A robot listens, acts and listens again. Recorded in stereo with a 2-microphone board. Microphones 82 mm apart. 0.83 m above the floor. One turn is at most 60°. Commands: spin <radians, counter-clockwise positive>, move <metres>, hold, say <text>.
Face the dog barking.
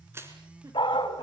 spin 1.05
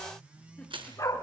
spin 0.79
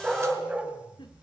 spin -0.17
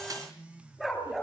say Found it: a dog barking, straight ahead, over 4 m away.